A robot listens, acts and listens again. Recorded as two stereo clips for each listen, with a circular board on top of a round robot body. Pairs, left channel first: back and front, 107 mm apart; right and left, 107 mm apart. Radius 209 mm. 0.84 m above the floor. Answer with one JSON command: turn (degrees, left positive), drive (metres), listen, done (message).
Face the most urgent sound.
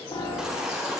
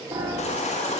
{"turn": -85}
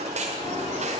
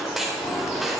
{"done": "Found it: a baby crying, straight ahead."}